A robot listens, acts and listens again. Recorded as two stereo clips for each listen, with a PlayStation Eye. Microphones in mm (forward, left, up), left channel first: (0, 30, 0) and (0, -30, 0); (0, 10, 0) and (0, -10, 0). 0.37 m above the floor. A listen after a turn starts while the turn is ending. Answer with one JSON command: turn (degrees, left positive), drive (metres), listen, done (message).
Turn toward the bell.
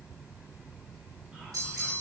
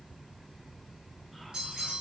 {"turn": -65}
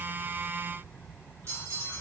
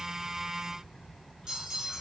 {"turn": -50}
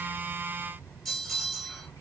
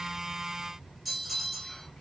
{"done": "Facing the bell, 1 to 2 m away."}